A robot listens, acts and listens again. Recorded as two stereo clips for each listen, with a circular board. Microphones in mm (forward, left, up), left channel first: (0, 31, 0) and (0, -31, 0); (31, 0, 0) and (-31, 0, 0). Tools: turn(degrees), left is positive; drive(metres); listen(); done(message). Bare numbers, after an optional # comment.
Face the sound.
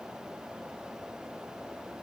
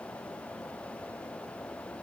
listen()
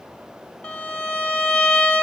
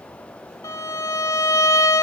# The violin: 20° left.
turn(20)
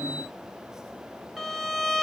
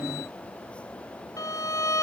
done("Found it: a violin, straight ahead, 2 to 4 m away.")